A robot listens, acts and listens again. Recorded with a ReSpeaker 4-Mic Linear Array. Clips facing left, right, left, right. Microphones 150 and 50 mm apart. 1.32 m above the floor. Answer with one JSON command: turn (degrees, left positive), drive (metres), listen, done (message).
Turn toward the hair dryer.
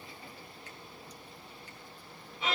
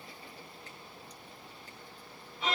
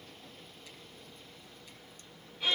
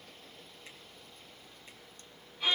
{"listen": true}
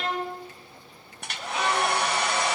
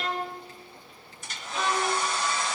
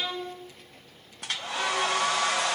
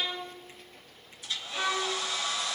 {"turn": 65}
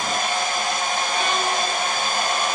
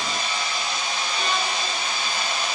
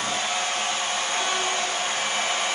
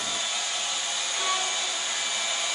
{"turn": 50}
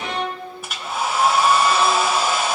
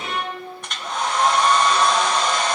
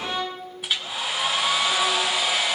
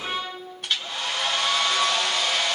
{"done": "Facing the hair dryer, 1 to 2 m away."}